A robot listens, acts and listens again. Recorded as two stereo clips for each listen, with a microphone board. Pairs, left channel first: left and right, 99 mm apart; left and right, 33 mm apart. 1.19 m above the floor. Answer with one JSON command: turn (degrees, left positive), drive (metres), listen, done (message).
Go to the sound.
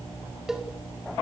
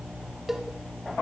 {"turn": -30}
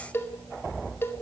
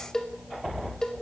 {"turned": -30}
{"turn": 25}
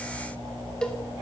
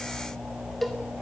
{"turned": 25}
{"turn": 10}
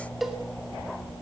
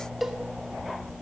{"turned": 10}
{"drive": 1.0}
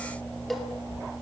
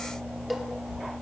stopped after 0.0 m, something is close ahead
{"done": "Blocked. The cowbell is further on, straight ahead."}